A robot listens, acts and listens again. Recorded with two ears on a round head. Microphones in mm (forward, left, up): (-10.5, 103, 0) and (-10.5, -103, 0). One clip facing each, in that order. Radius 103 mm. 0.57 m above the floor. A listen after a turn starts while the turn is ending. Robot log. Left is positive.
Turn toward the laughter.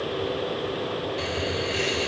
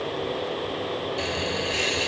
note: The laughter: about 15° right or 165° right.
cmd yaw -15
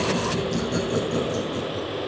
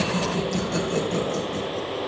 end: Facing the laughter, over 4 m away.